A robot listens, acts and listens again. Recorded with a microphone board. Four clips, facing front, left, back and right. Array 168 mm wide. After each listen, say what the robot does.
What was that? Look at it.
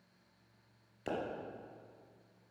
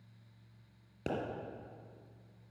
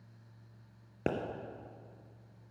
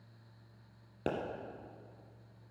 Turn 165° right.
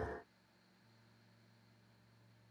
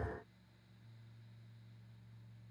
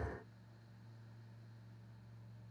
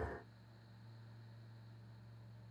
Facing where the pop came from. I can't hear it now.